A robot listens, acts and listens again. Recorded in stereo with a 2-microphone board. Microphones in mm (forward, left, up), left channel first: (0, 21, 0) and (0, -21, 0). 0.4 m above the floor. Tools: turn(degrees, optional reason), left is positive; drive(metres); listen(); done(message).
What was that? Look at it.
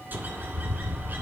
turn(degrees=-50, reason="The bird: about 50° right or 130° right.")
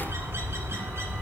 turn(degrees=-80, reason="So it is at 80° right.")
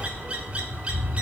turn(degrees=-30, reason="The bird is now 30° right.")
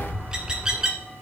turn(degrees=-15, reason="The bird is now 15° right.")
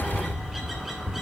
done("Found it: a bird, straight ahead.")